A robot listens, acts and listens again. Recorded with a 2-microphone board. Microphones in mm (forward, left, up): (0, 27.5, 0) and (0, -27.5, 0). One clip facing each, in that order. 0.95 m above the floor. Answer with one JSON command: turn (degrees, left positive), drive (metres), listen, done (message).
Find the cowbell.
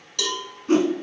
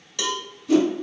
{"turn": -30}
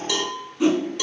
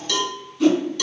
{"turn": 15}
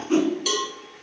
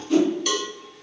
{"done": "Facing the cowbell."}